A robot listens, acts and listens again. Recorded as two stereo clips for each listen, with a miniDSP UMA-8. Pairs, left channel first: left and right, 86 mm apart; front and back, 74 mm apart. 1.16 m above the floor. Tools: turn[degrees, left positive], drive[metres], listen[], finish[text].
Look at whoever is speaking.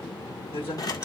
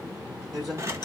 Thought: The man speaking: 95° left.
Action: turn[95]
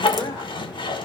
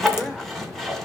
Thought: The man speaking is now 50° left.
Action: turn[50]
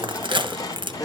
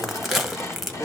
Thought: The man speaking is now 15° left.
Action: turn[15]
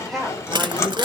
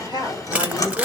Action: finish[Facing the man speaking, over 4 m away.]